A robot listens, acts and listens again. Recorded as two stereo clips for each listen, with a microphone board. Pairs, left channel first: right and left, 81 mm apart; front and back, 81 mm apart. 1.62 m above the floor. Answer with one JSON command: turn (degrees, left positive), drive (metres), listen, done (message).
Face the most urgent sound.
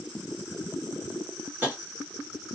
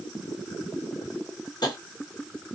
{"listen": true}
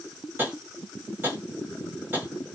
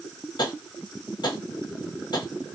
{"listen": true}
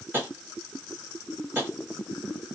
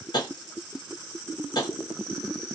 {"done": "I can't make out anything urgent to turn to."}